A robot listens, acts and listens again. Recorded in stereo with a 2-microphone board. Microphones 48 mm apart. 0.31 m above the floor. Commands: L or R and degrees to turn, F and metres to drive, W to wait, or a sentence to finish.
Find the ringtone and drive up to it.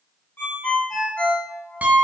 L45
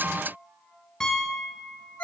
L85
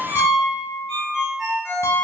F1.0
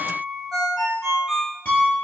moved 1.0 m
F1.0
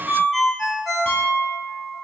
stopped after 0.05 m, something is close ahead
Arrived at the ringtone, straight ahead.